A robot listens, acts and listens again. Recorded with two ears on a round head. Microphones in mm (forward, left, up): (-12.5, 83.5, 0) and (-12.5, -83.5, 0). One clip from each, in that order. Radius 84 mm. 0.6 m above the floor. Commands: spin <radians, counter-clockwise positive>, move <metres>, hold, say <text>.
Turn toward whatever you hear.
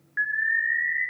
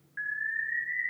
spin 1.13
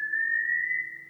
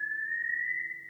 spin 0.70
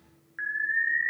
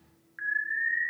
spin 0.26
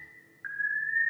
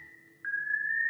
say Facing the alarm, 1 to 2 m away.